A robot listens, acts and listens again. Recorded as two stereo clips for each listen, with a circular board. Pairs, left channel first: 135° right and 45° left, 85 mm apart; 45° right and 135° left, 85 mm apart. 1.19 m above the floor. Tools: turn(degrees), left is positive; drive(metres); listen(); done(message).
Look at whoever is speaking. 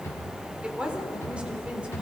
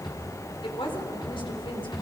turn(degrees=-30)
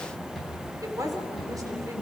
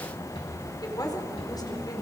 done("Facing the woman speaking, 2 to 4 m away.")